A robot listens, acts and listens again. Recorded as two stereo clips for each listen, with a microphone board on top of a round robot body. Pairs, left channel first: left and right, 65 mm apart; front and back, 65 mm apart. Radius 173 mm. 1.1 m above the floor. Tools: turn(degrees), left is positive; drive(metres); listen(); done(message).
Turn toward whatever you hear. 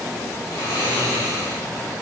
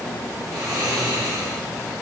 turn(degrees=145)
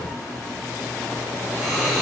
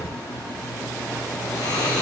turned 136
turn(degrees=10)
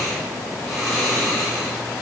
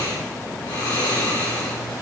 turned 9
done("Facing the snoring, 2 to 4 m away.")